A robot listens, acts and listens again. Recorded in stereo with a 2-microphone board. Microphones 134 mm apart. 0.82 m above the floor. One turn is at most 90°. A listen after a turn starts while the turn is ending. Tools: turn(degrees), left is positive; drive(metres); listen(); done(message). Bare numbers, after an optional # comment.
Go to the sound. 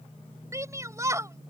# The shout: about 25° right or 155° right.
turn(-25)
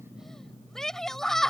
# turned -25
drive(1.0)
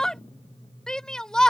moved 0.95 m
drive(1.0)
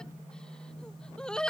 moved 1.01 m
drive(1.0)
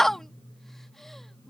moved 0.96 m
drive(1.0)
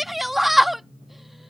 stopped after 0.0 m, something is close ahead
done("Arrived at the shout, straight ahead.")